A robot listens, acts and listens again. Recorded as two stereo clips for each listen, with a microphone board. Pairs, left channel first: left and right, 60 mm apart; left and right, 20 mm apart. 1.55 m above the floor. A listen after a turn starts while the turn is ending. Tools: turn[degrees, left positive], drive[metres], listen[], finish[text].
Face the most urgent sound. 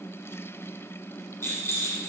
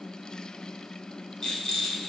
Action: listen[]
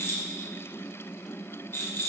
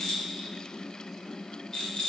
Action: listen[]
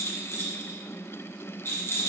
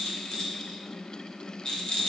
Action: finish[I can't make out anything urgent, only a rattle.]